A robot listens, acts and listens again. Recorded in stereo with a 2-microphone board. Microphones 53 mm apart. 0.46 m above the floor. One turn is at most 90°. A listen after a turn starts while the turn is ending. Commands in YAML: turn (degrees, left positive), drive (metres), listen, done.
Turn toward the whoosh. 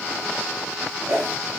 turn: -90
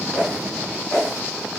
turn: 10
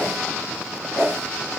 done: "Found it: a whoosh, straight ahead."